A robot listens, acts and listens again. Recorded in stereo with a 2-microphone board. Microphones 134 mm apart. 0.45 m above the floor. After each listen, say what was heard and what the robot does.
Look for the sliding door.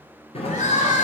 The sliding door: about 50° left or 130° left. Turn 50° left.
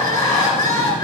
Keep listening.
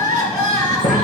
So it is at 80° left. Turn 80° left.
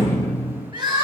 The sliding door is now 20° left. Turn 20° left.
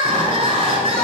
Keep listening.
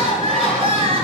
Keep listening.
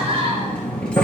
Found it: a sliding door, straight ahead, 1 to 2 m away.